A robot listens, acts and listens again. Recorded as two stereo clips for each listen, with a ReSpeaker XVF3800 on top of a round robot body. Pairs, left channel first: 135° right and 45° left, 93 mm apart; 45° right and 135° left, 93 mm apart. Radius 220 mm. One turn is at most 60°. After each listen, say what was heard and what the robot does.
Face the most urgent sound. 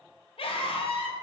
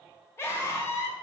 The scream: 110° right. Turn 60° right.
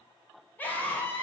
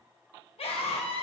The scream is now 65° right. Turn 60° right.
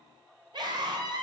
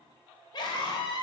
Facing the scream, 1 to 2 m away.